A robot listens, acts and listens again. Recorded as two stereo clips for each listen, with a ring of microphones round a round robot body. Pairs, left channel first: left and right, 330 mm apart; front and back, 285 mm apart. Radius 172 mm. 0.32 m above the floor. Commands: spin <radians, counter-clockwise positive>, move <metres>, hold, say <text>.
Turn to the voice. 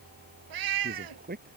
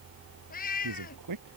spin -2.71
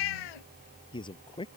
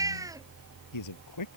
spin 0.26
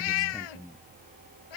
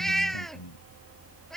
say Found it: a man speaking, straight ahead.